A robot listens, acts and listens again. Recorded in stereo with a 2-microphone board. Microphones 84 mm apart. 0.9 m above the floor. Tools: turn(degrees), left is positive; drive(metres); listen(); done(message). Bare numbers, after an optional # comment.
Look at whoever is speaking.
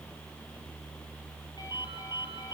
listen()
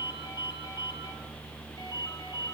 listen()
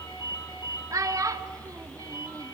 # The child speaking: about 40° right or 140° right.
turn(-40)
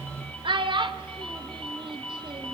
# So it is at 95° right.
turn(-95)
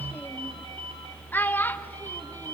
# The child speaking is now 20° left.
turn(20)
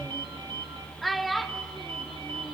done("Found it: a child speaking, straight ahead, 1 to 2 m away.")